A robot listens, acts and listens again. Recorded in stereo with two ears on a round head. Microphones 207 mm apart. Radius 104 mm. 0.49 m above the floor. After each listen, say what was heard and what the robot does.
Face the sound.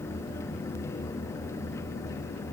Keep listening.
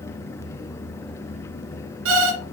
The alarm clock: about 65° right or 115° right. Turn 65° right.
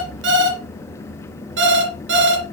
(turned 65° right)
So it is at 55° right. Turn 55° right.
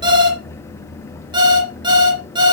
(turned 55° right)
The alarm clock is now 20° right. Turn 20° right.
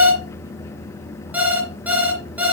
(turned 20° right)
Facing the alarm clock.